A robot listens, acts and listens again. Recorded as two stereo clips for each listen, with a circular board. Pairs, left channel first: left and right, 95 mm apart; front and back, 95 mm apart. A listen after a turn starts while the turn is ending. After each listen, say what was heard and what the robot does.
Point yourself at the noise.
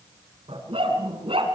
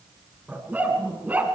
The dog barking: 105° right. Turn 105° right.
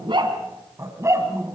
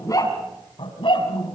The dog barking is now 25° right. Turn 25° right.
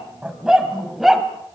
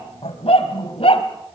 Found it: a dog barking, straight ahead, 2 to 4 m away.